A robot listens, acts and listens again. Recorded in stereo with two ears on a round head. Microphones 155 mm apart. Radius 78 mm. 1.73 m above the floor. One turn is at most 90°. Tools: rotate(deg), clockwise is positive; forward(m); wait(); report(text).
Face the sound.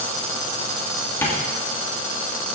rotate(-15)
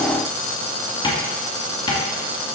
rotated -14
rotate(-90)
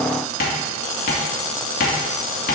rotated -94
rotate(-55)
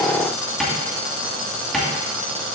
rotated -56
report("Found it: tapping, straight ahead.")